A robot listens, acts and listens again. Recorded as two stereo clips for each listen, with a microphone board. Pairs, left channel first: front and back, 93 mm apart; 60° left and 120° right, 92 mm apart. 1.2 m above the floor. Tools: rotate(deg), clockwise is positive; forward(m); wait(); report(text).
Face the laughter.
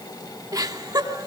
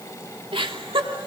rotate(135)
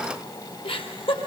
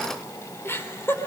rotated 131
report("Facing the laughter, over 4 m away.")